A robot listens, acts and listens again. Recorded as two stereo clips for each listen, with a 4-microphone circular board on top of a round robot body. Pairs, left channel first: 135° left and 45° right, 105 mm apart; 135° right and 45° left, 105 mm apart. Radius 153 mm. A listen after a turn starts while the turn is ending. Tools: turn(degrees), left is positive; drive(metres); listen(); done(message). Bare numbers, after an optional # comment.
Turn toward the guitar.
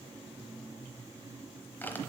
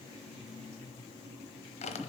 listen()
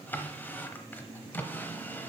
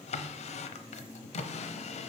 listen()
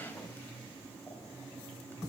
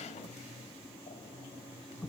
done("I can't make out a guitar, only a drawer.")